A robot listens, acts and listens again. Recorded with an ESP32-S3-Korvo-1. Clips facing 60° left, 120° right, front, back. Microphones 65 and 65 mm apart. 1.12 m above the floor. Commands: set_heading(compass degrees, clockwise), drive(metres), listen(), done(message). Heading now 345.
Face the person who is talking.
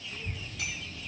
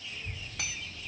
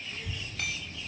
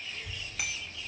set_heading(285)
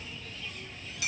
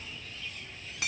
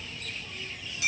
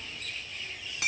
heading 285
set_heading(270)
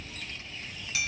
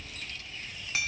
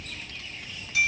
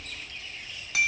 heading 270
done("Found it: a child speaking, straight ahead, 1 to 2 m away.")